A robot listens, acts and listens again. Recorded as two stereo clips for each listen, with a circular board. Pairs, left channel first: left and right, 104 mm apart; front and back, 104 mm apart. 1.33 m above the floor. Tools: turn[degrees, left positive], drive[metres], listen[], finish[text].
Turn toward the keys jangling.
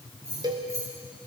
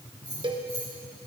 Thought: The keys jangling: 25° right.
Action: turn[-25]
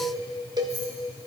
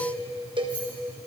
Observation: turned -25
Action: listen[]
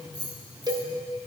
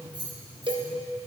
Thought: The keys jangling is now 40° right.
Action: turn[-40]
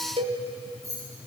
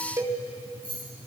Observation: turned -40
Thought: The keys jangling is now 30° right.
Action: turn[-30]
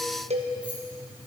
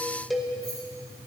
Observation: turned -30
Action: listen[]
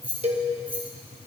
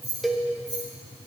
Thought: The keys jangling is now 15° right.
Action: turn[-15]
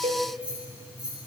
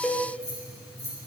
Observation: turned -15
Thought: The keys jangling is now 10° right.
Action: turn[-10]
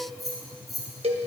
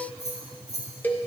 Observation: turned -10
Action: finish[Found it: keys jangling, straight ahead, over 4 m away.]